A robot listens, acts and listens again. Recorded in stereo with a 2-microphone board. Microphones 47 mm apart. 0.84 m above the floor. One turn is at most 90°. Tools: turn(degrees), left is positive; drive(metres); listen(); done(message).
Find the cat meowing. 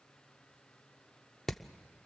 listen()
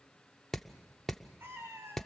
turn(degrees=-65)
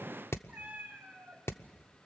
turn(degrees=-30)
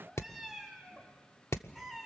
done("Facing the cat meowing.")